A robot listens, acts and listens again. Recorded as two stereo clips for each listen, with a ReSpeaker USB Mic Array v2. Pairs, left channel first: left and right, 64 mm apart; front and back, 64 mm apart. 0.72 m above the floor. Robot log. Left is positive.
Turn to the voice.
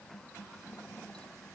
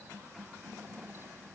cmd idle
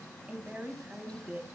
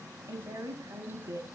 note: The woman speaking: 155° right.
cmd yaw -155
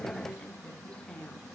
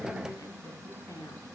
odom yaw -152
note: The woman speaking is now 10° left.
cmd yaw +10
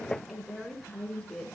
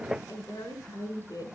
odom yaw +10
end: Found it: a woman speaking, straight ahead.